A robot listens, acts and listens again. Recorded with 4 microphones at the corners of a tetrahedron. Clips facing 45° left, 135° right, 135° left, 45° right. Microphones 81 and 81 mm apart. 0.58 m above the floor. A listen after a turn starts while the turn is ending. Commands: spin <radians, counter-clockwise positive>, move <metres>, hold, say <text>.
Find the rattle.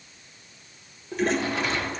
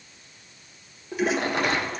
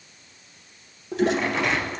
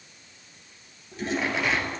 spin -2.27
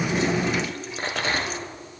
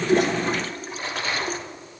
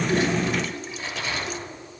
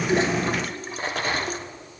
say Found it: a rattle, straight ahead, 1 to 2 m away.